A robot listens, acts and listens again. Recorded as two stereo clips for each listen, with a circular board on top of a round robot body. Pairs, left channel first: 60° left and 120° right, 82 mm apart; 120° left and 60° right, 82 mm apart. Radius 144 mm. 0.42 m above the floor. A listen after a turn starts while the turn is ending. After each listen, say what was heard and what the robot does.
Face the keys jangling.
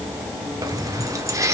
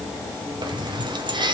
The keys jangling: 70° right. Turn 70° right.
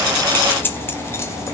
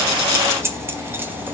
Found it: keys jangling, straight ahead, 1 to 2 m away.